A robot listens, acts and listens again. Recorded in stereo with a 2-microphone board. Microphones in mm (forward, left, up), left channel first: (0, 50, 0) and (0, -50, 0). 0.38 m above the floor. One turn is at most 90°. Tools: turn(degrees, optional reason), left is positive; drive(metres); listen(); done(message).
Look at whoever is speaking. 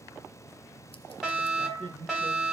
turn(degrees=-60, reason="The man speaking: about 60° right or 120° right.")
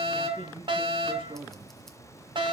turn(degrees=-60, reason="So it is at 60° right.")
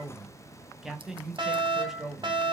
done("Facing the man speaking.")